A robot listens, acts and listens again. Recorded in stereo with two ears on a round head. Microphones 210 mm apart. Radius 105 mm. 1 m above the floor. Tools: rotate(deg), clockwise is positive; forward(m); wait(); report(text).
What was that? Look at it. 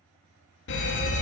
rotate(-50)
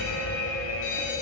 rotate(-70)
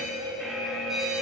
report("Facing the fire alarm, 2 to 4 m away.")